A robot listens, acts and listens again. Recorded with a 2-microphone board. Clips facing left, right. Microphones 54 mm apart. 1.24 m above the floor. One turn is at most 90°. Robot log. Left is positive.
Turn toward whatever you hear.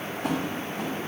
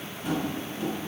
cmd yaw +90
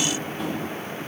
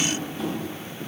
end: Found it: tapping, straight ahead, over 4 m away.